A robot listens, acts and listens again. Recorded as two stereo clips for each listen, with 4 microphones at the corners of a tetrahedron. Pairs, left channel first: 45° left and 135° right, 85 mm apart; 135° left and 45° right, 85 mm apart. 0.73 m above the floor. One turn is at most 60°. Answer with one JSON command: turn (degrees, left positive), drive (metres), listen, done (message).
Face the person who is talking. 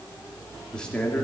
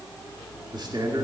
{"turn": -35}
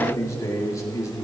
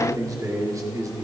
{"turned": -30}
{"done": "Found it: a man speaking, straight ahead, 2 to 4 m away."}